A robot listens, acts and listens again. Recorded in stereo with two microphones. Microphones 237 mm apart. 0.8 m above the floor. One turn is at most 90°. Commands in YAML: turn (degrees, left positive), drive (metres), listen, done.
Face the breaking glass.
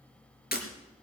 turn: 40
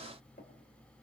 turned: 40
listen: true
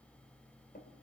done: "I heard breaking glass, but can't make it out now. It was about straight ahead or 100° left."